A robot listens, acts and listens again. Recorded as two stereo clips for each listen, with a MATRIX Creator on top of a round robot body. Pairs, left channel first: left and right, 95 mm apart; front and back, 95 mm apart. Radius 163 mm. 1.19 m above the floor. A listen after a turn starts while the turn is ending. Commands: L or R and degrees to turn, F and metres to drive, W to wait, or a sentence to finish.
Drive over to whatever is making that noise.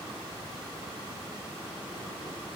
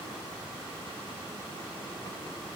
W
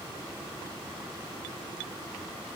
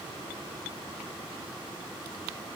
W
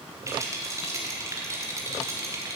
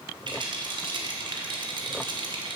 R150
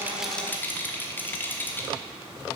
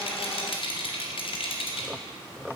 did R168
L20
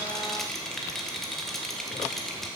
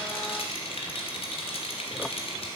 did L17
F1.0
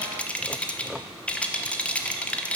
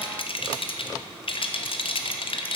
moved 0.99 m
L15
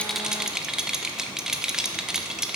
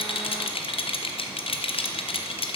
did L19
F1.0
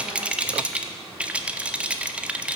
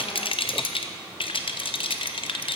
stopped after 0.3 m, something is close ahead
R10
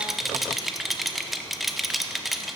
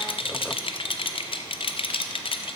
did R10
I am next to the rattle.